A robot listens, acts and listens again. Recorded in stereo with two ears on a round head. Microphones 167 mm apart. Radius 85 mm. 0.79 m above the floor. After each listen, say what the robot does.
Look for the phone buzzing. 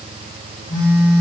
Turn 20° left.
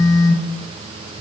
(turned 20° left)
Turn 135° left.
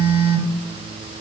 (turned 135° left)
Turn 15° left.
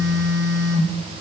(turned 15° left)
Found it: a phone buzzing, straight ahead, 1 to 2 m away.